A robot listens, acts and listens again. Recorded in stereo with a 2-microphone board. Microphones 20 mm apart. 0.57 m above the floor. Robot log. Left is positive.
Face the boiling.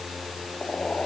note: The boiling: about 55° left or 125° left.
cmd yaw +55
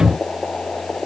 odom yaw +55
note: So it is at 65° left.
cmd yaw +65
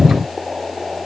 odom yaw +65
note: The boiling is now 10° left.
cmd yaw +10
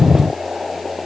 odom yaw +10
end: Found it: boiling, straight ahead.